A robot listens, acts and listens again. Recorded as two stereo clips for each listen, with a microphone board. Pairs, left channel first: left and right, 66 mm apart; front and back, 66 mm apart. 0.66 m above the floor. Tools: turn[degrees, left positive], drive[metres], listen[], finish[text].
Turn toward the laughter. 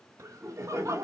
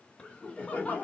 Thought: The laughter: 60° right.
Action: turn[-60]
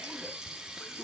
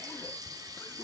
Action: listen[]
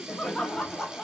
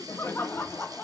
Thought: The laughter is now 30° left.
Action: turn[30]
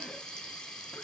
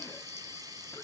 Action: listen[]
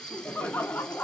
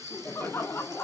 Thought: The laughter is now 40° left.
Action: turn[40]
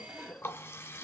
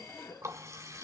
Thought: The laughter is now 25° left.
Action: turn[25]
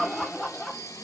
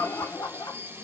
Action: finish[Found it: laughter, straight ahead.]